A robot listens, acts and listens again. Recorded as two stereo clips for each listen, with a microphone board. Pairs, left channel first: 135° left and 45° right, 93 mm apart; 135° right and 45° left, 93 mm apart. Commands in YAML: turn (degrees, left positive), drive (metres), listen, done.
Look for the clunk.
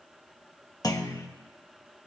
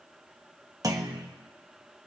turn: 90
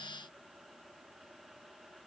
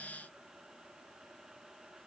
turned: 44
turn: 45
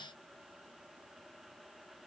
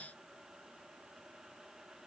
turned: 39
turn: 10
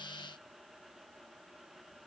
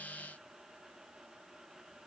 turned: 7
done: "Facing where the clunk came from. I can't hear it now."